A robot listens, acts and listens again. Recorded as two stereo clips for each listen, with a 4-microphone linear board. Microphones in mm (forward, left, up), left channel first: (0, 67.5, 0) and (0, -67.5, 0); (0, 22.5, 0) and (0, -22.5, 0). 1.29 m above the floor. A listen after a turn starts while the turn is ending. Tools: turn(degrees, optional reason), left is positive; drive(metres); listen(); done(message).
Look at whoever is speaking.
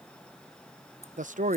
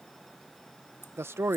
turn(degrees=-70, reason="The man speaking: about 70° right or 110° right.")
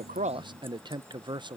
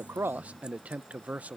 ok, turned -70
turn(degrees=-35, reason="So it is at 35° right.")
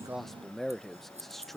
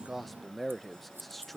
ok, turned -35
done("Facing the man speaking.")